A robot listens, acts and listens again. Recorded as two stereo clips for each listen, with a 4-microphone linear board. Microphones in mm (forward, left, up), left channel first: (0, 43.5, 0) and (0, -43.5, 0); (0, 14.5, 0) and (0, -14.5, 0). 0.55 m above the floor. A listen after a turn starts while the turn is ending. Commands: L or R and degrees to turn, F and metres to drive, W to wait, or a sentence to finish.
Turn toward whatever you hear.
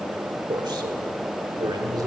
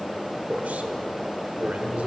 R50
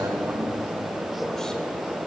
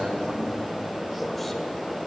W
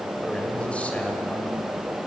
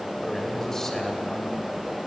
L15
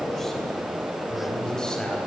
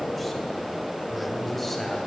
L10
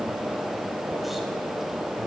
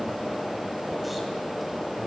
W
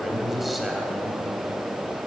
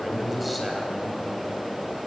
Facing the man speaking, 2 to 4 m away.